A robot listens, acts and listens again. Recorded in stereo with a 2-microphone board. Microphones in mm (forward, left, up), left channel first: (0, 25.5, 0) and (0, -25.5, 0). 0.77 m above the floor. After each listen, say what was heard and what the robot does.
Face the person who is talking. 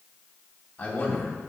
The man speaking: about 30° left or 150° left. Turn 30° left.
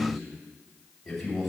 Found it: a man speaking, straight ahead, 2 to 4 m away.